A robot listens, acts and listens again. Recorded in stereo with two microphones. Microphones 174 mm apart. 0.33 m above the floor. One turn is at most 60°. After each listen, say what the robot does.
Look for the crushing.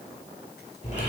Keep listening.
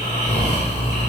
Keep listening.
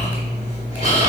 I can't make out crushing to turn to.